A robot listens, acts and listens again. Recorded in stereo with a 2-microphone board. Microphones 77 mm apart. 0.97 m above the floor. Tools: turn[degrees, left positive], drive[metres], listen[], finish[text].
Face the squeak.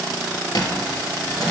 Thought: The squeak: about 60° left or 120° left.
Action: turn[60]
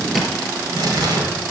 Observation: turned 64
Action: finish[Found it: a squeak, straight ahead, 2 to 4 m away.]